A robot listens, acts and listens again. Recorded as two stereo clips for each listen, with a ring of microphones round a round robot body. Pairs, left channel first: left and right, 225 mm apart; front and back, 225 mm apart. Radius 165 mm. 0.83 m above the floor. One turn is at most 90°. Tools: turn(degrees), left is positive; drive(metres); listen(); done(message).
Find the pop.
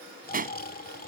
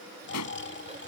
turn(degrees=-40)
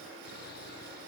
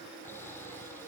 done("I heard a pop from this way, but can't make it out now.")